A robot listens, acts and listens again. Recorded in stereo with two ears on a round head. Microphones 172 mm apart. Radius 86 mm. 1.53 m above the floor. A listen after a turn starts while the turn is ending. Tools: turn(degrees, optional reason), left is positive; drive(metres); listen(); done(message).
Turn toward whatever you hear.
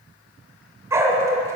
turn(degrees=-15, reason="The dog barking: about 15° right or 165° right.")
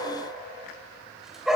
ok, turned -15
turn(degrees=-30)
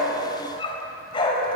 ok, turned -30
turn(degrees=25, reason="So it is at 25° left.")
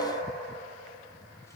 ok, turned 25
listen()
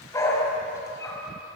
turn(degrees=15, reason="The dog barking is now 15° left.")
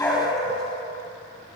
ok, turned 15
done("Facing the dog barking, over 4 m away.")